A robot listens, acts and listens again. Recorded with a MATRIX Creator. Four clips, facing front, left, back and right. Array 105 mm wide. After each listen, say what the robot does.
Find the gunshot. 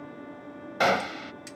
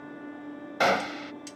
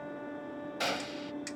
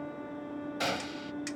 Turn 45° left.
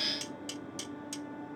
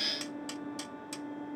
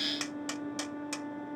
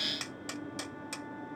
Facing where the gunshot came from. I can't hear it now.